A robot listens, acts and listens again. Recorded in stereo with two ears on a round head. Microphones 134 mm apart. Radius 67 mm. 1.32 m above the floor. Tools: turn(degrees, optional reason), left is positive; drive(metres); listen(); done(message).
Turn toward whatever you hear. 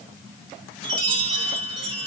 turn(degrees=-30, reason="The chime: about 30° right or 150° right.")
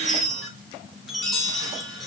done("Facing the chime.")